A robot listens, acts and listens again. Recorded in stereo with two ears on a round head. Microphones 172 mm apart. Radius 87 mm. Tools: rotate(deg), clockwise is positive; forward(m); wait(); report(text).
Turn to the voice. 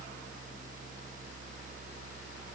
wait()
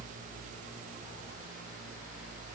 wait()
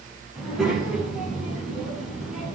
rotate(30)
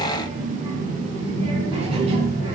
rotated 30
rotate(145)
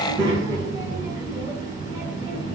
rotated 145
rotate(20)
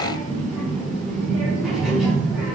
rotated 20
report("Facing the child speaking.")